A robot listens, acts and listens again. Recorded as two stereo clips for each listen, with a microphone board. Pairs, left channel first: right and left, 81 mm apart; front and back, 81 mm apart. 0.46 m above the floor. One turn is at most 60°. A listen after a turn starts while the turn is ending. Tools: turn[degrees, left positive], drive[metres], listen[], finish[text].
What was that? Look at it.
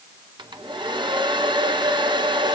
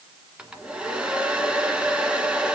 Thought: The hair dryer: 100° left.
Action: turn[60]
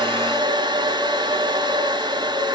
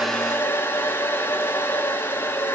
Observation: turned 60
Thought: The hair dryer is now 65° left.
Action: turn[60]
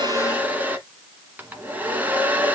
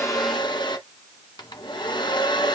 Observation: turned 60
Thought: The hair dryer is now 20° left.
Action: turn[20]
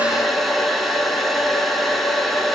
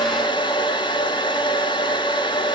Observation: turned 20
Action: finish[Facing the hair dryer.]